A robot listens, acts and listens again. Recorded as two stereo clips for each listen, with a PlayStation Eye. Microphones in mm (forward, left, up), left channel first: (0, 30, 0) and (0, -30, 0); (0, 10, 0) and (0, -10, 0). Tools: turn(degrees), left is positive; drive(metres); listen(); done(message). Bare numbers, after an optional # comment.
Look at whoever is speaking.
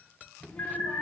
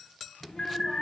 # The child speaking: about 20° left or 160° left.
turn(20)
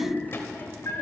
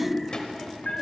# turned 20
# So it is at 135° left.
turn(135)
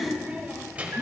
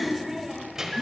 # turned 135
# The child speaking is now 25° right.
turn(-25)
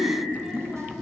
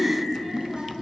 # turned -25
listen()
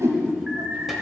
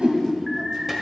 listen()
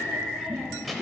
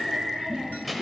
done("Facing the child speaking, 1 to 2 m away.")